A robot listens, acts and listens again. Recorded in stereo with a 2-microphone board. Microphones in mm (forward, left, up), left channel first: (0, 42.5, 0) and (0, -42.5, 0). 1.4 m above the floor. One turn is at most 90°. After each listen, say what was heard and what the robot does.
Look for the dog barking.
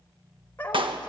The dog barking: about 20° left or 160° left. Turn 20° left.
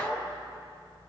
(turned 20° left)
Turn 30° left.
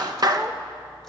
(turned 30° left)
Keep listening.
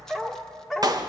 Found it: a dog barking, straight ahead, 1 to 2 m away.